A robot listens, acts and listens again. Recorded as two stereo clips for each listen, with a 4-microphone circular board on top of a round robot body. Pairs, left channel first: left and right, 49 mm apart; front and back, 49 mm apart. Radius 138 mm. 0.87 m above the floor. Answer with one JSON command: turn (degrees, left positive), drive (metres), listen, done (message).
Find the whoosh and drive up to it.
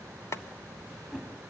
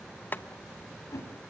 {"drive": 1.0}
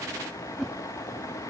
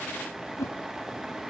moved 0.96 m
{"drive": 1.0}
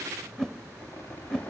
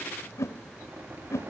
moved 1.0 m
{"turn": 10}
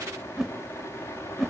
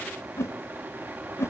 {"drive": 1.0}
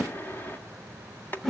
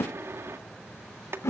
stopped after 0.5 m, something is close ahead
{"done": "I am next to the whoosh."}